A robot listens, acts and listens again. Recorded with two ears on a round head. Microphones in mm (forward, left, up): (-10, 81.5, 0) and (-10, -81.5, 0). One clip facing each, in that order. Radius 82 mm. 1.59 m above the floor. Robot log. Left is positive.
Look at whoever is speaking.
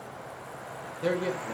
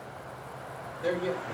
note: The man speaking: about 70° left or 110° left.
cmd yaw +70
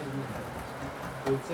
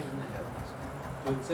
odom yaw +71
end: Found it: a man speaking, straight ahead, 1 to 2 m away.